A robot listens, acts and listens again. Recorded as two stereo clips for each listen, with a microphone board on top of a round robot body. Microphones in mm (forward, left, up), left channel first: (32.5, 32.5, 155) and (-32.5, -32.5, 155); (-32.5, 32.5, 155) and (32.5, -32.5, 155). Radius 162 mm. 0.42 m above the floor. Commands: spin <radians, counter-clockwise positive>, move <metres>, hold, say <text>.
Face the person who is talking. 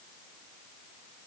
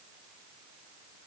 hold
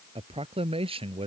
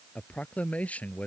spin -2.62
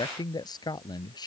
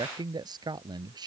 say Found it: a man speaking, straight ahead.